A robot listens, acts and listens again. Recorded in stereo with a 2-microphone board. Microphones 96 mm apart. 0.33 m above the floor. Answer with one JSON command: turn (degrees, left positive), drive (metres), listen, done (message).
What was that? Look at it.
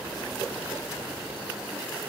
{"listen": true}
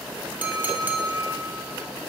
{"turn": -20}
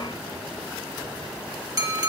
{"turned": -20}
{"turn": -140}
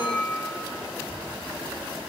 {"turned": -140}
{"done": "Facing the clink."}